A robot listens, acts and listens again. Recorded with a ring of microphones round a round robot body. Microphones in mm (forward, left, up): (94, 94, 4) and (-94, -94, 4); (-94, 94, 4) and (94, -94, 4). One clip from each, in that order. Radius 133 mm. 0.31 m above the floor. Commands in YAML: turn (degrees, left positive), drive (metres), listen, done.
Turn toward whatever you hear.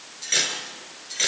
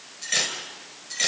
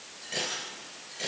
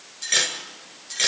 turn: -40
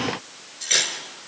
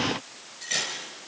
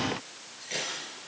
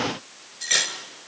turn: -15
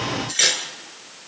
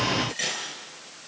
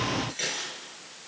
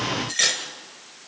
done: "Facing the cutlery clinking."